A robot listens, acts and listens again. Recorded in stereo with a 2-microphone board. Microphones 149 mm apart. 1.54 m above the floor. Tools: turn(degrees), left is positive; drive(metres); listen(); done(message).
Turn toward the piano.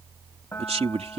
turn(degrees=15)
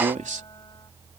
listen()
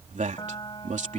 turn(degrees=150)
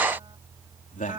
turn(degrees=-35)
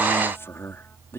listen()
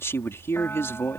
listen()
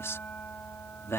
turn(degrees=10)
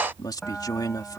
done("Found it: a piano, straight ahead.")